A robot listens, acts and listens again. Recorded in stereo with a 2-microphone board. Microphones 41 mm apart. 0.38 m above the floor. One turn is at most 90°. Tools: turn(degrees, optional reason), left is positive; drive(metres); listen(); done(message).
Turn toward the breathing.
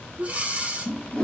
turn(degrees=-30, reason="The breathing: about 30° right or 150° right.")
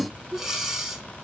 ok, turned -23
done("Facing the breathing.")